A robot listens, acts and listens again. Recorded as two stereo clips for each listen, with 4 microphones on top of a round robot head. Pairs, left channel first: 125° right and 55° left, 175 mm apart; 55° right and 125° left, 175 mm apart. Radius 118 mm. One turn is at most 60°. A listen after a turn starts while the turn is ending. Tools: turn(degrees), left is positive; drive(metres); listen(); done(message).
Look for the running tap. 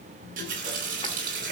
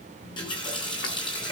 turn(degrees=10)
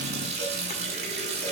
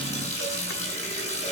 done("Found it: a running tap, straight ahead.")